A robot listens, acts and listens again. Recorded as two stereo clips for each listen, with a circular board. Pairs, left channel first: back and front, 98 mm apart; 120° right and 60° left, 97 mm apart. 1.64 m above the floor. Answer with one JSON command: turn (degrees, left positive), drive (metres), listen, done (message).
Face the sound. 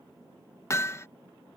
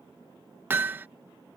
{"turn": 125}
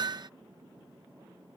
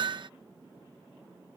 {"turn": 35}
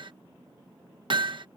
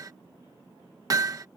{"turn": 15}
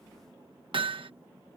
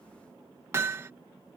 {"done": "Found it: hammering, straight ahead."}